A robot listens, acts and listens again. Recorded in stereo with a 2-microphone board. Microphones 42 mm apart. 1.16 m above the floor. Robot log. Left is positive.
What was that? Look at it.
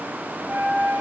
note: The flute: about 50° right or 130° right.
cmd yaw -50
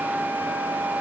note: So it is at 80° right.
cmd yaw -80
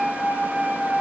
note: The flute is now 15° left.
cmd yaw +15
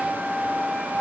end: Facing the flute, under 1 m away.